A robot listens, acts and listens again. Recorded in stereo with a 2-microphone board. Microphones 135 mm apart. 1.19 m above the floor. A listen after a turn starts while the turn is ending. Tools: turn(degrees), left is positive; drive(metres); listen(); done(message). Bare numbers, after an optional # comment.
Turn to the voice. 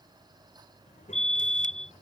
# The child speaking: about 70° left or 110° left.
turn(70)
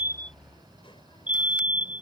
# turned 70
# So it is at 40° left.
turn(40)
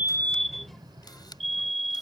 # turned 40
done("Facing the child speaking.")